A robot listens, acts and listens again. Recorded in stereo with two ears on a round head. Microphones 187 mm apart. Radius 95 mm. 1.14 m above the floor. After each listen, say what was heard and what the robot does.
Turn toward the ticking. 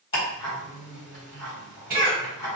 The ticking: about 25° left or 155° left. Turn 25° left.
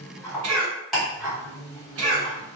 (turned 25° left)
Found it: ticking, straight ahead, 1 to 2 m away.